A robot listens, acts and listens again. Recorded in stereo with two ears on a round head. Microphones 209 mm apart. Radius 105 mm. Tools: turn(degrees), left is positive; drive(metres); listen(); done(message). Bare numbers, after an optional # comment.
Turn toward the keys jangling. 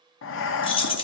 # The keys jangling: about 20° left or 160° left.
turn(20)
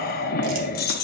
# So it is at 140° left.
turn(140)
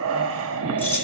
# The keys jangling is now 10° left.
turn(10)
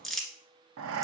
listen()
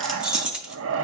done("Facing the keys jangling, under 1 m away.")